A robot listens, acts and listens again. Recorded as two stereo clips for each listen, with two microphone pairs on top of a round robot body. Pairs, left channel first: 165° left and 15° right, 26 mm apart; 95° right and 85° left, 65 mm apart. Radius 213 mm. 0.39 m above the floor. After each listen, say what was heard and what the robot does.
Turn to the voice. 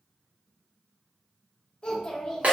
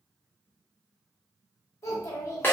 The child speaking: 130° right. Turn 130° right.
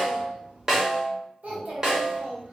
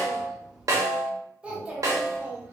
The child speaking is now 20° left. Turn 20° left.
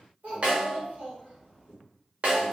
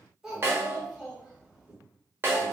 Facing the child speaking, 1 to 2 m away.